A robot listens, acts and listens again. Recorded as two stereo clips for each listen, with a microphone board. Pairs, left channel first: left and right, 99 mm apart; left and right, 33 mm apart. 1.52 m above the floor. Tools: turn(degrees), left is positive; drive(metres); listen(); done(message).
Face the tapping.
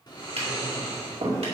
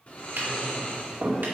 turn(degrees=-70)
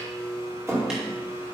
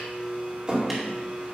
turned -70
done("Found it: tapping, straight ahead.")